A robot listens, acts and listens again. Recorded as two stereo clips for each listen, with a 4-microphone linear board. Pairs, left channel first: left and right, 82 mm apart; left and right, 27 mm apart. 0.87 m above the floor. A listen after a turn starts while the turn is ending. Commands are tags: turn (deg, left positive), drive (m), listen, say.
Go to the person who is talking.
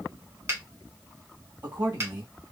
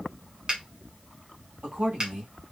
<turn deg="-65"/>
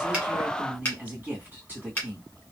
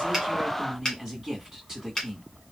<turn deg="-25"/>
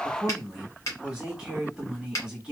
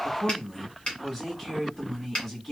<turn deg="-10"/>
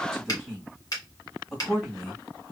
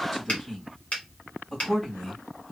<drive m="1.0"/>
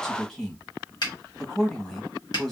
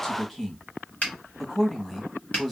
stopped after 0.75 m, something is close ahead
<turn deg="10"/>
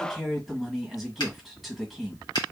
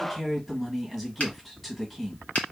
<say>Arrived at the man speaking, straight ahead.</say>